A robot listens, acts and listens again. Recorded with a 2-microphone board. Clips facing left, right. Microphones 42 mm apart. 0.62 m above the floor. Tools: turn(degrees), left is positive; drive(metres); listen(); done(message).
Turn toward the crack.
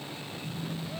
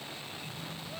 listen()
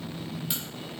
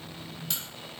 turn(degrees=30)
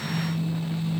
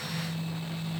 listen()
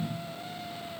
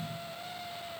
done("I heard a crack, but can't make it out now. It was about 15° right or 135° left.")